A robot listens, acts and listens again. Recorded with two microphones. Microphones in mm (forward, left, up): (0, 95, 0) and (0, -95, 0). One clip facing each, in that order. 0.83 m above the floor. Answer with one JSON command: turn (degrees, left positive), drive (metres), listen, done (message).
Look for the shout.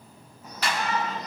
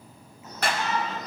{"turn": 30}
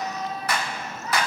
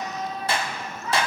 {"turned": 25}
{"turn": 140}
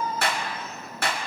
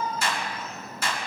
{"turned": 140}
{"done": "Found it: a shout, straight ahead."}